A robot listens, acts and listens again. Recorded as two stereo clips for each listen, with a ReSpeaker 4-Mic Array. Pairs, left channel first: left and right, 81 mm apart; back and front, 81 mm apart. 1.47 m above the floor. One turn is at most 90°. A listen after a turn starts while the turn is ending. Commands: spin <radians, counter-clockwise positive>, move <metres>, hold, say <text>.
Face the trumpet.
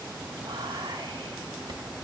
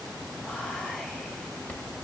hold
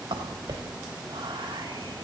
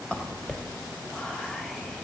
hold
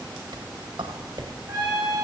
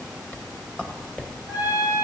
spin -1.57
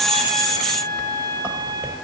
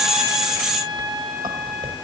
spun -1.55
spin -1.22
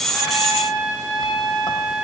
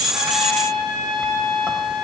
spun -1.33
say Facing the trumpet, over 4 m away.